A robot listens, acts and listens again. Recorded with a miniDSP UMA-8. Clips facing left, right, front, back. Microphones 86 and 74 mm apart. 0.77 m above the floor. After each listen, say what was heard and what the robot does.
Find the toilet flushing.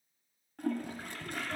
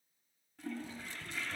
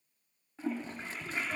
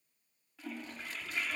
The toilet flushing: 60° left. Turn 60° left.
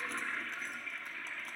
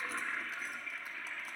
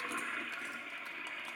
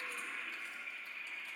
Facing the toilet flushing, under 1 m away.